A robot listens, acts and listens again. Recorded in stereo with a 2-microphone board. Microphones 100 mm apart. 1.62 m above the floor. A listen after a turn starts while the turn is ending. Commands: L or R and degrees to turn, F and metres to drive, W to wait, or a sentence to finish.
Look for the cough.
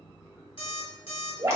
W
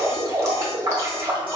W
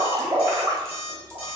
I can't make out a cough, only dripping and an alarm clock.